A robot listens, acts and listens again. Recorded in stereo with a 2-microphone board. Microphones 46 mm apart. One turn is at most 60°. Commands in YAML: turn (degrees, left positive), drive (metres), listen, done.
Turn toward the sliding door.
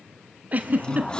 turn: 20
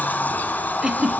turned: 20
turn: 60
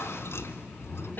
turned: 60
turn: 60
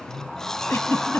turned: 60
turn: 10
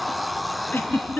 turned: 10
done: "Found it: a sliding door, straight ahead."